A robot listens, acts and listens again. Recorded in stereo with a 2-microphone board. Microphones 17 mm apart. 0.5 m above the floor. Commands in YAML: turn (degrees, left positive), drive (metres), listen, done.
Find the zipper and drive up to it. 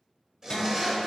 turn: -35
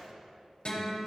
listen: true
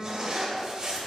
turn: -105
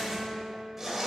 turn: -10
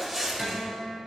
drive: 1.0
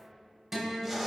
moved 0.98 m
drive: 1.0
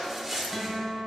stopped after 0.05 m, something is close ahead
done: "I am next to the zipper."